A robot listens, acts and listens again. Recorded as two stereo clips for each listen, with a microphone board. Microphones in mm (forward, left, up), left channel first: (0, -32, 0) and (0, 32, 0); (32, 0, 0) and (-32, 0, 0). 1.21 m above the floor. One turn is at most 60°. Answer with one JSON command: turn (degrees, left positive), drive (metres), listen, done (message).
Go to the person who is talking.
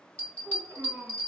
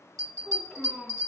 {"turn": 60}
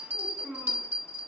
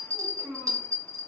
{"turn": 35}
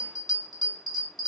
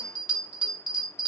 {"listen": true}
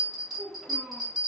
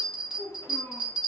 {"drive": 1.0}
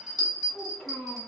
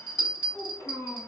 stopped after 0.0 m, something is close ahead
{"done": "Something is in my way. I am facing the child speaking but have not reached it."}